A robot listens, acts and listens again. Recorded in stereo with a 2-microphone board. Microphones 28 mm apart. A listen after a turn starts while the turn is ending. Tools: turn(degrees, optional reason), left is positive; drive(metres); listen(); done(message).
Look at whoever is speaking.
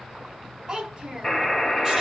turn(degrees=-30, reason="The child speaking: about 30° right or 150° right.")
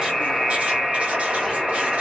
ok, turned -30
listen()
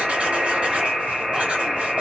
listen()
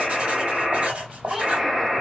done("Found it: a child speaking, straight ahead, 1 to 2 m away.")